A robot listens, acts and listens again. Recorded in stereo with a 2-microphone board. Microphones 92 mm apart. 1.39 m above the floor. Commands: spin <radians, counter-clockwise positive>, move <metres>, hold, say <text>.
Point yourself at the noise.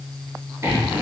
spin -0.52
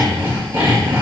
spin -2.09
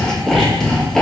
say Facing the sawing, 1 to 2 m away.